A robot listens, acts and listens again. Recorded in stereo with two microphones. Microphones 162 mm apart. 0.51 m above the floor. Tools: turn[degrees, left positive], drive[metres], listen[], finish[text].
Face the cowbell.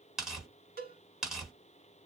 Thought: The cowbell: about 65° right or 115° right.
Action: turn[-65]
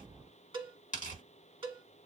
Thought: So it is at 35° right.
Action: turn[-35]
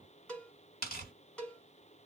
Action: finish[Found it: a cowbell, straight ahead.]